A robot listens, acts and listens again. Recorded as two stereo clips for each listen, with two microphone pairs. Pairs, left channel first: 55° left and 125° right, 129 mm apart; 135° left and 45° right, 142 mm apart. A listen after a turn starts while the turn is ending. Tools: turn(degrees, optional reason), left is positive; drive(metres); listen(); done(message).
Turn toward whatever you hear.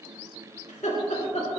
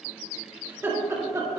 turn(degrees=25, reason="The laughter: 25° left.")
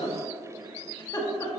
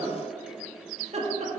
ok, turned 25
turn(degrees=-10, reason="The laughter is now 10° right.")
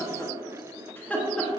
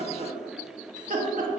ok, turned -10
turn(degrees=-30, reason="The laughter is now 30° right.")
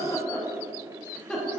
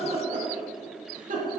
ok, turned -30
turn(degrees=-30, reason="The laughter is now 30° right.")
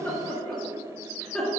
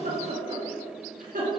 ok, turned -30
turn(degrees=-30, reason="The laughter is now 30° right.")
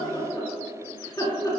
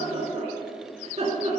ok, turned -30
done("Found it: laughter, straight ahead.")